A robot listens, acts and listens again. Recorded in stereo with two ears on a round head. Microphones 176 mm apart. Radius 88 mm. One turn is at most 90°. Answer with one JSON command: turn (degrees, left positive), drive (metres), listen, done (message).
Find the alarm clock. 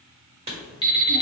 {"turn": 25}
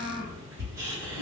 {"listen": true}
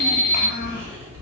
{"turn": 90}
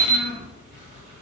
{"turn": 35}
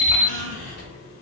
{"done": "Facing the alarm clock, 1 to 2 m away."}